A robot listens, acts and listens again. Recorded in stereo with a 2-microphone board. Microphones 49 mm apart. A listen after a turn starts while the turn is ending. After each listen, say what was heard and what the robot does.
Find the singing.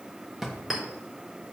Keep listening.
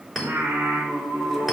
The singing: about 65° right or 115° right. Turn 65° right.
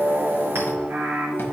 So it is at 45° right. Turn 45° right.
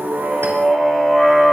Found it: singing, straight ahead, 1 to 2 m away.